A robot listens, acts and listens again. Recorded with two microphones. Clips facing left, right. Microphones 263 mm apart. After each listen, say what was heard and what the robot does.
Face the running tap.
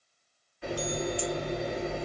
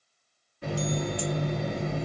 The running tap: about 45° right or 135° right. Turn 45° right.
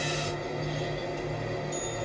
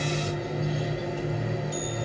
Found it: a running tap, straight ahead.